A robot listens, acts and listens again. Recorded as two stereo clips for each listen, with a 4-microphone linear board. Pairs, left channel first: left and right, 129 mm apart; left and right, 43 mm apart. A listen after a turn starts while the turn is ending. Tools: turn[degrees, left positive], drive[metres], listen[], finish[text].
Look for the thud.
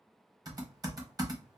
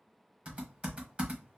Action: listen[]
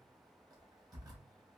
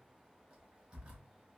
Action: listen[]
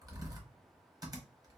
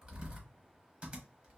Action: finish[I can't make out a thud, only typing on a keyboard.]